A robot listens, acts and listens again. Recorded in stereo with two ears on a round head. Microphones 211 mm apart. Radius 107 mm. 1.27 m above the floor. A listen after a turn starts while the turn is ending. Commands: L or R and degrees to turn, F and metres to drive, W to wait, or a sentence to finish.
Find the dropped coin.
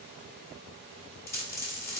L30
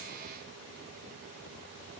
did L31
W
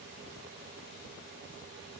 I heard a dropped coin, but can't make it out now. It was about 20° right or 135° left.